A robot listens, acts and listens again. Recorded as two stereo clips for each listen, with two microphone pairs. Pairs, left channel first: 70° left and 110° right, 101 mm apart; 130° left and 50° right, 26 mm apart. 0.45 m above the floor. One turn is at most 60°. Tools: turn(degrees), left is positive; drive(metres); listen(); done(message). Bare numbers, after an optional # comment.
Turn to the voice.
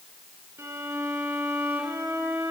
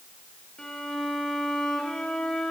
listen()
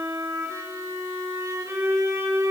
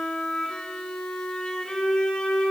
listen()
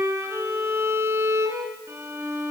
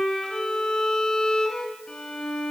done("I can't make out anyone speaking, only a violin.")